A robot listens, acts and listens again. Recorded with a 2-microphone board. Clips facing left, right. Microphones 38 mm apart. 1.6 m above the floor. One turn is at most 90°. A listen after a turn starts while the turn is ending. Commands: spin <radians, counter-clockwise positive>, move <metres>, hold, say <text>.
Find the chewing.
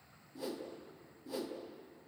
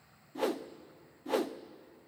hold
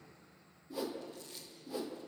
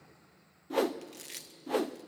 spin -1.57
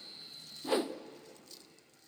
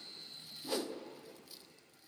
hold
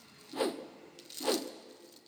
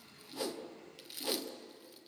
spin -0.17
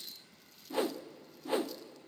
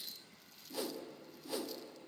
hold
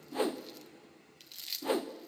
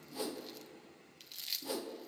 say Facing the chewing, 1 to 2 m away.